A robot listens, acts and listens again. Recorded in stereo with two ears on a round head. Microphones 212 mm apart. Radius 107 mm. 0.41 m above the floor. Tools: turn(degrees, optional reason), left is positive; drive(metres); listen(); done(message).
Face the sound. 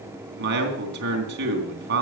turn(degrees=-50, reason="The man speaking: about 50° right or 130° right.")
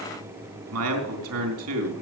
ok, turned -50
turn(degrees=-80, reason="So it is at 80° right.")
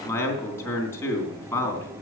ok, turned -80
turn(degrees=10, reason="The man speaking is now 10° left.")
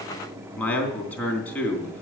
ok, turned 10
done("Facing the man speaking, 2 to 4 m away.")